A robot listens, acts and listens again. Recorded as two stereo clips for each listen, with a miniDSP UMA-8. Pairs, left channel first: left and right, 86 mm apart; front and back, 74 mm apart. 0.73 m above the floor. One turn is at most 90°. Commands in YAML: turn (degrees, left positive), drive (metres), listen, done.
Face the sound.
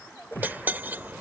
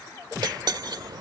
turn: -90
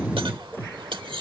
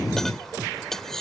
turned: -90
turn: -85
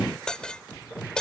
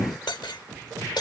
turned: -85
turn: 10
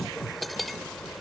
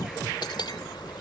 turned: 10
done: "Facing the cutlery clinking."